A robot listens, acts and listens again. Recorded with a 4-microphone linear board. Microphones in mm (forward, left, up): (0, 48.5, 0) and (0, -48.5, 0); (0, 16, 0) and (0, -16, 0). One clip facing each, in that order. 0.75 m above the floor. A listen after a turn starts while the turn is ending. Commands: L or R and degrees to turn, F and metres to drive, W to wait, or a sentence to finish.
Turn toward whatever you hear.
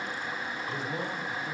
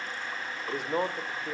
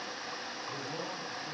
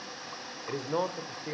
R70
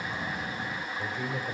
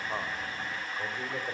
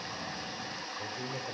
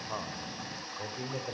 R15
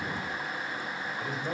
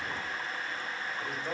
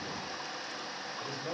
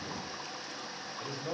Facing the man speaking, over 4 m away.